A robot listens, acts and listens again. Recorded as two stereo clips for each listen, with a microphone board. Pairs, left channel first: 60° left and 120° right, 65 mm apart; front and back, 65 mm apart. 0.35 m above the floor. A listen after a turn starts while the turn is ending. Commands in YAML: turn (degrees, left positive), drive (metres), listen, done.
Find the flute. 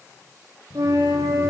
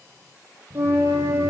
turn: -130
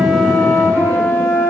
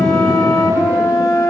done: "Facing the flute, 1 to 2 m away."